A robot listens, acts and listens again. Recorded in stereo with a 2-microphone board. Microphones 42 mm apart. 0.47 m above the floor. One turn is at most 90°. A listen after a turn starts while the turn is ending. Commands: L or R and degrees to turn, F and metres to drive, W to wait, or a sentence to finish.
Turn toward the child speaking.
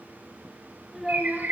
R30
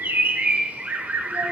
W
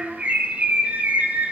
R90
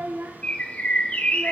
R55
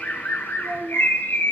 R15
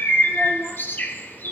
W
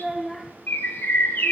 Facing the child speaking.